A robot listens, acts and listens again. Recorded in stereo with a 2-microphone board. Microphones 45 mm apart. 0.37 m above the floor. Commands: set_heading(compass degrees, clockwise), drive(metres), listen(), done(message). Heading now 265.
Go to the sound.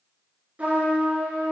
set_heading(300)
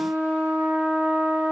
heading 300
set_heading(50)
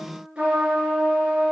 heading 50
set_heading(75)
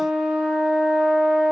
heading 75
drive(1.0)
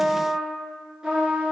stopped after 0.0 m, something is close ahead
set_heading(85)
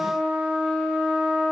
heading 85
done("Blocked. The trumpet is further on, straight ahead.")